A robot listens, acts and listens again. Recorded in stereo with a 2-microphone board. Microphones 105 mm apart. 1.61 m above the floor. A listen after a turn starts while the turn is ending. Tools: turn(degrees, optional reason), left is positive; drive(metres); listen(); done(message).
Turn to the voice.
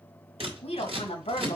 turn(degrees=65, reason="The woman speaking: about 65° left or 115° left.")
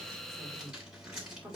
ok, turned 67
turn(degrees=-15, reason="So it is at 15° right.")
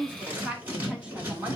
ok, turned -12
turn(degrees=-10, reason="The woman speaking is now 10° right.")
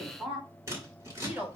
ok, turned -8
turn(degrees=-10, reason="The woman speaking is now 10° right.")
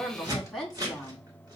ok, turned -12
done("Found it: a woman speaking, straight ahead.")